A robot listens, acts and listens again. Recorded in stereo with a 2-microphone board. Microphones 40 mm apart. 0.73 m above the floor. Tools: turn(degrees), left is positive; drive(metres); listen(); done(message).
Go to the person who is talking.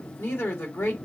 turn(degrees=70)
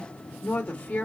turn(degrees=25)
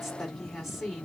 drive(metres=1.0)
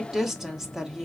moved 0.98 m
turn(degrees=-15)
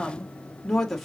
drive(metres=1.0)
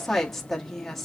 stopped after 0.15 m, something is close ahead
done("I am next to the woman speaking.")